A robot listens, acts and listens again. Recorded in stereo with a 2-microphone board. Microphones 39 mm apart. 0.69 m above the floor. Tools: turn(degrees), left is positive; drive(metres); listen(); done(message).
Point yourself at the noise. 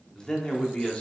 turn(degrees=25)
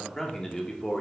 turn(degrees=25)
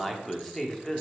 turn(degrees=30)
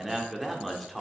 done("Found it: a man speaking, straight ahead.")